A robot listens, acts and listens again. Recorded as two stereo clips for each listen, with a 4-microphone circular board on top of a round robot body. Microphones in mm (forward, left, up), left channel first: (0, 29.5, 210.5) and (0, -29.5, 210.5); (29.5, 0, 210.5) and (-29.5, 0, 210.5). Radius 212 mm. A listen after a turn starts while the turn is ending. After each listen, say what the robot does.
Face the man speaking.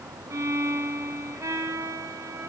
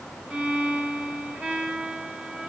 Keep listening.
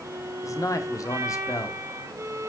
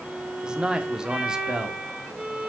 Turn 100° left.
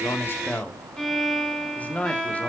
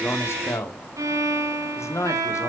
Turn 30° left.
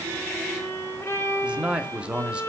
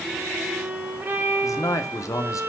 Turn 20° right.
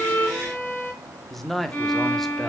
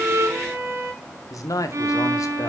Facing the man speaking, 2 to 4 m away.